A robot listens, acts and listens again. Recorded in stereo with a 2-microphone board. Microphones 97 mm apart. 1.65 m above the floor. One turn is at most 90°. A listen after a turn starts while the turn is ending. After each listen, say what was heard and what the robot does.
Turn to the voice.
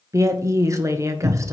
The woman speaking: about 35° right or 145° right. Turn 35° right.
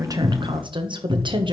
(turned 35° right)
So it is at 110° right. Turn 90° right.
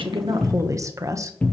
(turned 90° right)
The woman speaking is now 40° right. Turn 40° right.
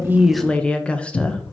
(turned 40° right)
The woman speaking is now 15° left. Turn 15° left.
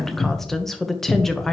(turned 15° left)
Found it: a woman speaking, straight ahead.